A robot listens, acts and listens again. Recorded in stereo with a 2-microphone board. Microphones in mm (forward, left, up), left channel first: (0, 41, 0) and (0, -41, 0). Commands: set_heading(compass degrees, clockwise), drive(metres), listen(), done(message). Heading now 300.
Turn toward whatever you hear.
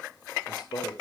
set_heading(240)
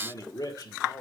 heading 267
set_heading(212)
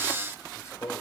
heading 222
set_heading(187)
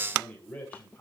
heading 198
set_heading(178)
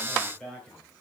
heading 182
set_heading(172)
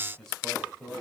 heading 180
done("Facing the man speaking, 2 to 4 m away.")